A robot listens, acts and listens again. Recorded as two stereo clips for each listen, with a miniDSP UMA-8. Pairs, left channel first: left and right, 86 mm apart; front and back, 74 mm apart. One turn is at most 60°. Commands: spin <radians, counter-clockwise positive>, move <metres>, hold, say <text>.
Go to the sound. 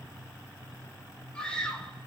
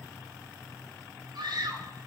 spin 1.05
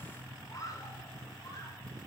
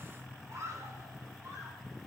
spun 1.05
spin 1.05
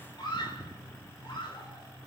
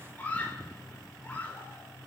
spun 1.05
spin 1.05
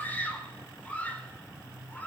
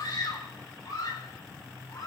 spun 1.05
spin 0.35
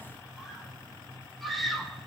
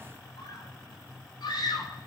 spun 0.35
move 1.0
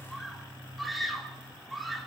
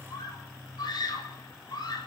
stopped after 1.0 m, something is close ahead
say Blocked. The scream is further on, straight ahead.